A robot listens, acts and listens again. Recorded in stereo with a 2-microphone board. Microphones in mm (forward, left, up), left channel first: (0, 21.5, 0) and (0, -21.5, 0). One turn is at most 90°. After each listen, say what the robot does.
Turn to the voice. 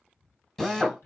Turn 55° left.
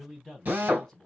Turn 10° left.
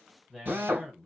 Found it: a man speaking, straight ahead.